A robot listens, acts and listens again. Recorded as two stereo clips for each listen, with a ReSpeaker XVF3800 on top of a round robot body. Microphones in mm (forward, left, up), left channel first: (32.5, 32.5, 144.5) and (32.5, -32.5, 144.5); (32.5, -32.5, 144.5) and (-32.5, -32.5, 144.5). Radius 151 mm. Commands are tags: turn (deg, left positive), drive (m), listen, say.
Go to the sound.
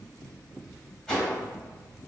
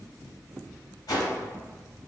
<turn deg="10"/>
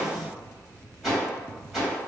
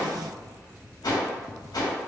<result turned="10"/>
<drive m="1.0"/>
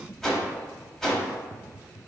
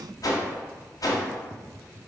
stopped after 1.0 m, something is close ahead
<say>I am next to the whoosh.</say>